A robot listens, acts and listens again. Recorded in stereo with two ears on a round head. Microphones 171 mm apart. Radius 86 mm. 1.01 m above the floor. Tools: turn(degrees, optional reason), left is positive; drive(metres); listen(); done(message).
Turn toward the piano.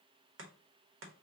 listen()
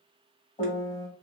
turn(degrees=20, reason="The piano: about 20° left or 160° left.")
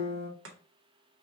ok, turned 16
turn(degrees=140, reason="So it is at 140° left.")
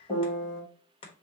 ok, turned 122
turn(degrees=20, reason="The piano is now 20° left.")
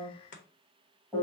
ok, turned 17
done("Facing the piano.")